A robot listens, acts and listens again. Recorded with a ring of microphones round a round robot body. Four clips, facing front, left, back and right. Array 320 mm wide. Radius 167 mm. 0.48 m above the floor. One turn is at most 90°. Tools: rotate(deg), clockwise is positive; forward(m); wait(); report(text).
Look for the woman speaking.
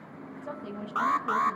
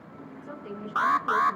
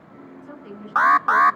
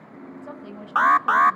rotate(50)
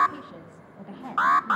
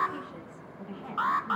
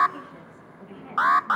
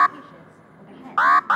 report("Facing the woman speaking, over 4 m away.")